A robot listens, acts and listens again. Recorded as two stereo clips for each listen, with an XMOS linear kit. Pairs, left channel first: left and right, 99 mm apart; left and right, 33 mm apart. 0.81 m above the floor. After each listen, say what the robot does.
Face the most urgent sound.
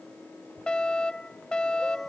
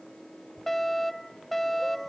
Turn 30° left.
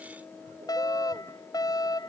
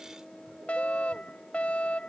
Turn 140° left.
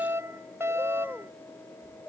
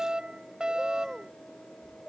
Turn 25° right.
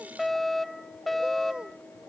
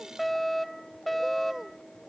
Facing the fire alarm.